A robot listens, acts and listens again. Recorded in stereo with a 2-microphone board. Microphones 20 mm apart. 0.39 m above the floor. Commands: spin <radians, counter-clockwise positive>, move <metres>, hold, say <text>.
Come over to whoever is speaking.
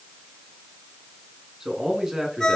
spin -0.52
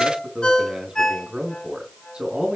spin -2.09
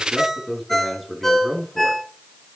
move 1.0
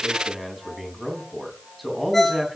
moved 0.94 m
move 1.0
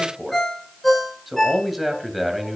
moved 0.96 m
spin -0.17
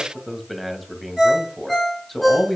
move 1.0
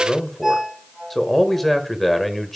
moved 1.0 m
spin 0.17
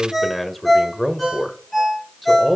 move 1.0
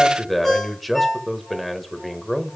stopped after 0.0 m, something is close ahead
say I am next to the man speaking.